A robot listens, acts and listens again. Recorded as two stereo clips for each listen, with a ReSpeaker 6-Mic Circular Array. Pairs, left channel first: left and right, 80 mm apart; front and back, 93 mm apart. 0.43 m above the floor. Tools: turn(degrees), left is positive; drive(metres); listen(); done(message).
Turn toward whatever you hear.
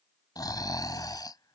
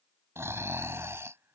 turn(degrees=120)
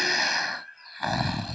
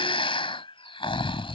done("Found it: snoring, straight ahead.")